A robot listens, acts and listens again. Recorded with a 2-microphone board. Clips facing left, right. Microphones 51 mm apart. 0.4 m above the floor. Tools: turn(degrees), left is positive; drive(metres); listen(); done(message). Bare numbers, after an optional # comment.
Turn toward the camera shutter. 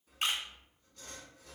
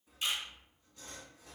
# The camera shutter: about 65° left or 115° left.
turn(65)
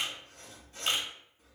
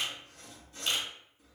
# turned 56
# So it is at 45° left.
turn(45)
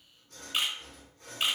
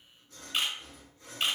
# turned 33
# The camera shutter is now 10° left.
turn(10)
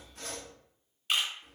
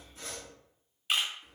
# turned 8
done("Found it: a camera shutter, straight ahead.")